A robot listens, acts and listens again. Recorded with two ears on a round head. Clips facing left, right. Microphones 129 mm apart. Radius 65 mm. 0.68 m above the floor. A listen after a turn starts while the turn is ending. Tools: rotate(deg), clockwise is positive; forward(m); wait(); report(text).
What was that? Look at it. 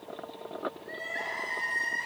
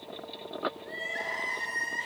rotate(30)
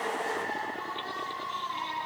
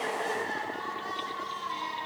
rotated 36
rotate(115)
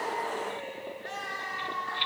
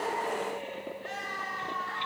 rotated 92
rotate(25)
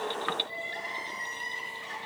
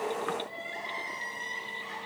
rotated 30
report("Found it: crying, straight ahead, over 4 m away.")